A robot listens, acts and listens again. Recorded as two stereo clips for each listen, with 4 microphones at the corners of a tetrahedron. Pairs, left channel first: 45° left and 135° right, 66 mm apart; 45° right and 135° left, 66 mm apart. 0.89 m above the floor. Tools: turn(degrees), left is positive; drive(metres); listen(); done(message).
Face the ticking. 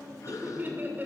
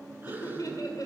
listen()
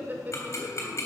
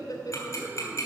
done("Found it: ticking, straight ahead, 2 to 4 m away.")